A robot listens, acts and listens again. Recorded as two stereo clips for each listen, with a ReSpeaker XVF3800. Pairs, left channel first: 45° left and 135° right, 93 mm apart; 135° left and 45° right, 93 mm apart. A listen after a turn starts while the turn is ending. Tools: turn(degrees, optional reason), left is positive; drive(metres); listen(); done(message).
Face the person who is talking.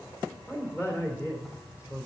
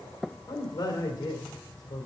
turn(degrees=105, reason="The man speaking: 105° left.")
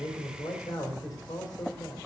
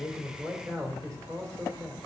done("Found it: a man speaking, straight ahead, 2 to 4 m away.")